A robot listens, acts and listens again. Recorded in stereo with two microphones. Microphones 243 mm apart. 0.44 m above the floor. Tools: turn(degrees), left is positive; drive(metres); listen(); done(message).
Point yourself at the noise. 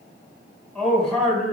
turn(degrees=30)
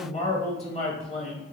turn(degrees=150)
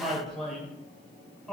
done("Facing the man speaking.")